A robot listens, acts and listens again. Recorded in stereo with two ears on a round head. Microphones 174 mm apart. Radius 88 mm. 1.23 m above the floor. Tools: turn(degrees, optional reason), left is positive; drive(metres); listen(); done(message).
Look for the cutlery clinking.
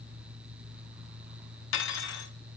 turn(degrees=70, reason="The cutlery clinking: about 70° left or 110° left.")
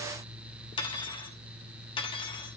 turn(degrees=25, reason="So it is at 25° left.")
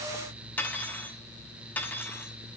turn(degrees=10, reason="The cutlery clinking is now 10° left.")
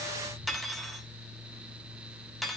done("Found it: cutlery clinking, straight ahead, 1 to 2 m away.")